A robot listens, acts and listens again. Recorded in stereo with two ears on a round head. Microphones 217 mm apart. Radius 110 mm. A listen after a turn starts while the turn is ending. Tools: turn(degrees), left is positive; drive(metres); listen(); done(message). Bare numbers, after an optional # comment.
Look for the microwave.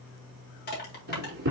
# The microwave: about 45° right or 135° right.
turn(-45)
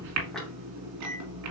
# So it is at 95° right.
turn(-95)
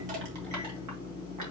# The microwave is now 15° left.
turn(15)
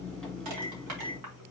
done("Found it: a microwave, straight ahead.")